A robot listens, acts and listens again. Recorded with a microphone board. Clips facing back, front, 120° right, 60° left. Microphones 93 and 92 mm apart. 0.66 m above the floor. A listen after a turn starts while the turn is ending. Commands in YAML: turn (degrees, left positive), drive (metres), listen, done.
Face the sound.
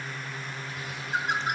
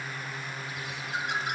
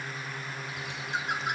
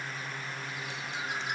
turn: -130
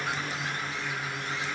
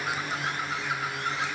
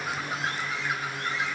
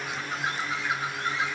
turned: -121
turn: -10
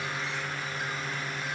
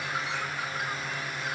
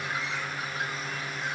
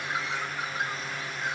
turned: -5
done: "Found it: a bird, straight ahead."